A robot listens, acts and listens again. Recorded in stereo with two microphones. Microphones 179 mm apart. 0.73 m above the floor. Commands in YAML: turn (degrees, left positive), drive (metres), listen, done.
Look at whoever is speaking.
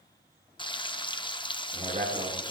turn: -40
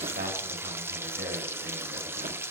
turn: -100
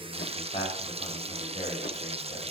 turn: 30
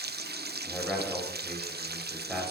done: "Facing the man speaking, over 4 m away."